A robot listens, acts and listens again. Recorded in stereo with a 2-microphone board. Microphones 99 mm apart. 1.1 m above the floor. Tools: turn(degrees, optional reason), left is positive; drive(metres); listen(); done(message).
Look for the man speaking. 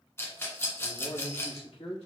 turn(degrees=70, reason="The man speaking: about 70° left or 110° left.")
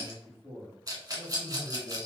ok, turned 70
done("Found it: a man speaking, straight ahead.")